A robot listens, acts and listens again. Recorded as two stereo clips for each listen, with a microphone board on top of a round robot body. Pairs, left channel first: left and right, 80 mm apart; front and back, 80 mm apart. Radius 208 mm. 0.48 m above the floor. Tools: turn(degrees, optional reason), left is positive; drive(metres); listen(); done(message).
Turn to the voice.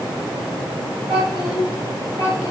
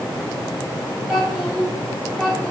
turn(degrees=-85, reason="The child speaking: 85° right.")
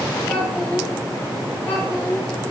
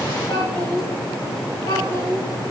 turn(degrees=15, reason="The child speaking is now 15° left.")
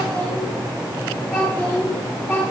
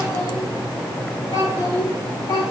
turn(degrees=10, reason="The child speaking is now 10° left.")
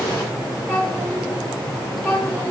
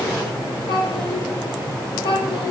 done("Facing the child speaking, over 4 m away.")